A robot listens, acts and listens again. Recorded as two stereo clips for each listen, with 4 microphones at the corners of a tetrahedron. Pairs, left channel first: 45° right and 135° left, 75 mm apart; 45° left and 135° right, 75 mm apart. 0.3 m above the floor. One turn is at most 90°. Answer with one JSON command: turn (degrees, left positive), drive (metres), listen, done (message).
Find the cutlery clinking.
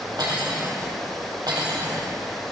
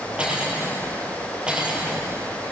{"turn": 90}
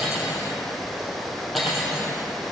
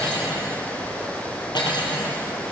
{"turn": 45}
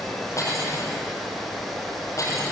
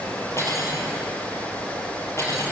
{"done": "Found it: cutlery clinking, straight ahead, over 4 m away."}